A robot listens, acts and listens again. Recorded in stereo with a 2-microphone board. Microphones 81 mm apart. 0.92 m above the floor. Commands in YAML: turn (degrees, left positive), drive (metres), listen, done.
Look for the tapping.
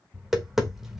turn: -30
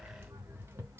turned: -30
turn: -145
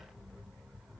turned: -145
listen: true
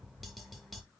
listen: true
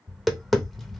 done: "Found it: tapping, straight ahead."